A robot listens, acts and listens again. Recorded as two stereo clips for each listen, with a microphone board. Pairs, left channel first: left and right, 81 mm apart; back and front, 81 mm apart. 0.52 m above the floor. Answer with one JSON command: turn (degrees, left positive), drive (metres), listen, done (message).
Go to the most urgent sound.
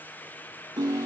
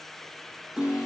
{"listen": true}
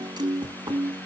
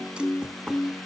{"listen": true}
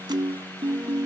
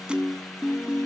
{"done": "I can't make out anything urgent, only a piano."}